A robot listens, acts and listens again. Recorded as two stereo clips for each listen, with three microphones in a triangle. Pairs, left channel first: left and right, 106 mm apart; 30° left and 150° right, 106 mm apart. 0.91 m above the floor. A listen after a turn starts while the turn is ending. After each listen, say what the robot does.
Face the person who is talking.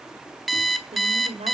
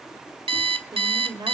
Turn 100° right.
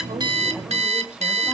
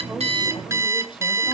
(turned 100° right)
Keep listening.
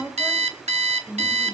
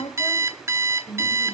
Turn 10° right.
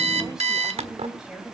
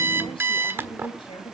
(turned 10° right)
Found it: a woman speaking, straight ahead.